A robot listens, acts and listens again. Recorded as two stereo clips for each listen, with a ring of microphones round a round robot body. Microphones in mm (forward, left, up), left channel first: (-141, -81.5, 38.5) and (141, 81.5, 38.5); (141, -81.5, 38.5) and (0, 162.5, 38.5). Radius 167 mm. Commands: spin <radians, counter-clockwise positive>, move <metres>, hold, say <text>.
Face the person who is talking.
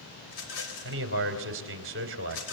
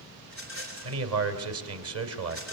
spin 1.48
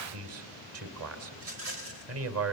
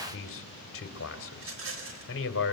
spin -0.35
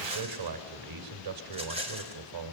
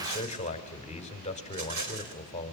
say Found it: a man speaking, straight ahead.